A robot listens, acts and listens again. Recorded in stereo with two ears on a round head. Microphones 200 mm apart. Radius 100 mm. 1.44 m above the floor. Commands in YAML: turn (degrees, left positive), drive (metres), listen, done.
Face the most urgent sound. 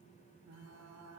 listen: true
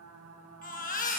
turn: 40
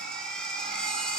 done: "Facing the baby crying, 1 to 2 m away."